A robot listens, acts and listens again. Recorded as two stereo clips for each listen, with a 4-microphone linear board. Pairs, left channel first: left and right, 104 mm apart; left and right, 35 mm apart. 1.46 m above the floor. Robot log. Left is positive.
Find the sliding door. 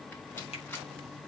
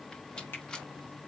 cmd idle
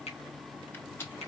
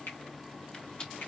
cmd idle
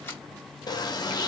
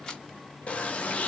note: The sliding door: about 40° left or 140° left.
cmd yaw +40
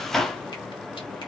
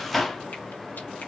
end: Found it: a sliding door, straight ahead.